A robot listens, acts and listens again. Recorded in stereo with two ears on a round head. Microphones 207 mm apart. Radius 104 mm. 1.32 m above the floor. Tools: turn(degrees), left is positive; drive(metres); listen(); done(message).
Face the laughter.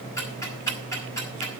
listen()
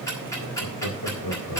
turn(degrees=90)
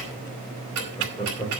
turn(degrees=10)
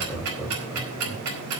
done("Found it: laughter, straight ahead.")